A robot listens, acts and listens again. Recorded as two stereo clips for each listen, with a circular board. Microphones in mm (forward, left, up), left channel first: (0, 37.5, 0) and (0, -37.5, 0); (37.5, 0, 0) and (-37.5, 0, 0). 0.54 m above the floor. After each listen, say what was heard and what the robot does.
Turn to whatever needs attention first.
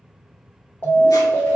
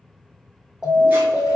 The alarm: 70° left. Turn 70° left.
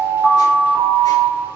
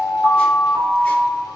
The alarm is now 25° left. Turn 25° left.
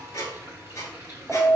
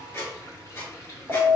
The alarm is now 10° left. Turn 10° left.
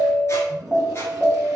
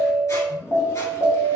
Facing the alarm.